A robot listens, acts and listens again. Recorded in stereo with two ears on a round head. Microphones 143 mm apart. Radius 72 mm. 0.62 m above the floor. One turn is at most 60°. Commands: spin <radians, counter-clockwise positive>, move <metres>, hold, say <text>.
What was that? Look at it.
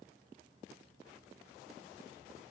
hold
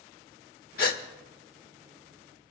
spin 1.05
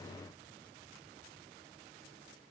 hold
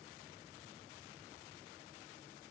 say I heard a gasp, but can't make it out now. It was about straight ahead or 60° left.